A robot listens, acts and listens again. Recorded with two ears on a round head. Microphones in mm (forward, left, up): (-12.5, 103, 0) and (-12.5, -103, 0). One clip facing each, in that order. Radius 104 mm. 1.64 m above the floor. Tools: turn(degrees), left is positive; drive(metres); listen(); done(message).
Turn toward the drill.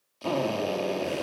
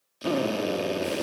turn(degrees=-20)
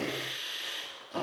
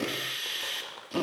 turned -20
turn(degrees=-140)
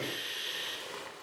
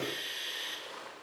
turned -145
done("Found it: a drill, straight ahead, over 4 m away.")